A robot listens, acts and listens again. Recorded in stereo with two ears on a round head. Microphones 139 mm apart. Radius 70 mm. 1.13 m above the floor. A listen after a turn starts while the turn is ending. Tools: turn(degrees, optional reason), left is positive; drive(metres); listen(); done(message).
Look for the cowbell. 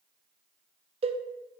turn(degrees=-40, reason="The cowbell: about 40° right or 140° right.")
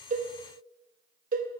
turn(degrees=-90, reason="So it is at 90° right.")
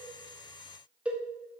turn(degrees=-10, reason="The cowbell is now 10° right.")
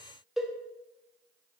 done("Found it: a cowbell, straight ahead, under 1 m away.")